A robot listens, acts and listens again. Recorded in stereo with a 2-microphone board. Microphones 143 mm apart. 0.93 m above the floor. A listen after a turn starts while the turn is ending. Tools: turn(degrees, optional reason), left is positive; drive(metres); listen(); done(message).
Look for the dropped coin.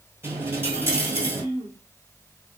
turn(degrees=-30)
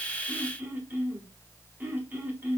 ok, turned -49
listen()
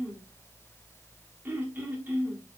done("I heard a dropped coin, but can't make it out now. It was about 35° left or 115° right.")